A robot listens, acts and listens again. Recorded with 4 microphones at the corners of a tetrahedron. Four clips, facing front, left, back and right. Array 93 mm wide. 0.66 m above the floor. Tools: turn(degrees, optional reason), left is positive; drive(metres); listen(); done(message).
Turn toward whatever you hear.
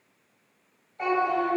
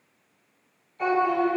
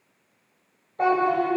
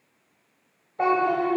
turn(degrees=-125, reason="The child speaking: 125° right.")
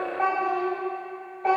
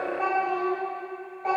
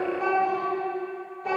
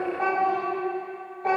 turn(degrees=-10, reason="The child speaking is now 10° right.")
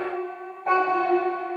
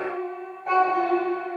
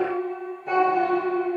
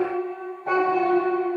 turn(degrees=-10, reason="The child speaking is now 10° right.")
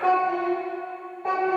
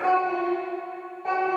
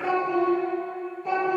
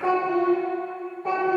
done("Found it: a child speaking, straight ahead.")